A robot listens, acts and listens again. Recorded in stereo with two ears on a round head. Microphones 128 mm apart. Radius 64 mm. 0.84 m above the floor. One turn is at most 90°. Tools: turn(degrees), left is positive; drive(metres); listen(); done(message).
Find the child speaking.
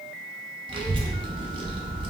turn(degrees=-40)
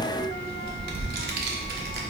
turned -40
turn(degrees=-90)
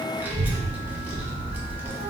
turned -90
turn(degrees=-10)
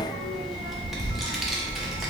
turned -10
done("Facing the child speaking.")